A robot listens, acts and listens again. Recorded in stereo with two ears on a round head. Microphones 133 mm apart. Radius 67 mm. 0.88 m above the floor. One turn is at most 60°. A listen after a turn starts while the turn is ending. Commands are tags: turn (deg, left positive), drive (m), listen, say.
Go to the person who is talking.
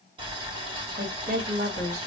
<turn deg="-60"/>
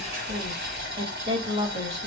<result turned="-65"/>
<turn deg="-45"/>
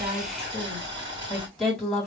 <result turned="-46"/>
<drive m="1.0"/>
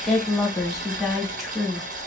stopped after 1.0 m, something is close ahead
<say>I am next to the woman speaking.</say>